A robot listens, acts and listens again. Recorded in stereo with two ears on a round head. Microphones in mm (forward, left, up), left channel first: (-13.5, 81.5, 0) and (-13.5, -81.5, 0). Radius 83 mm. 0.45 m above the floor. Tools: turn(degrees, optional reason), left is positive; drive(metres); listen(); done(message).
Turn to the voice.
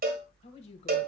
turn(degrees=35, reason="The woman speaking: about 35° left or 145° left.")
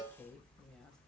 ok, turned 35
done("Found it: a woman speaking, straight ahead, 1 to 2 m away.")